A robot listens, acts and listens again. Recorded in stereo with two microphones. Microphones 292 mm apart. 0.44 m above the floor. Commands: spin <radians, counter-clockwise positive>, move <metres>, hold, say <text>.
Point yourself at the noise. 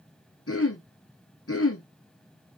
spin 0.87
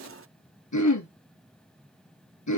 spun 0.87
spin 1.40
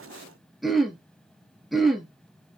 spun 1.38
say Found it: throat clearing, straight ahead, 1 to 2 m away.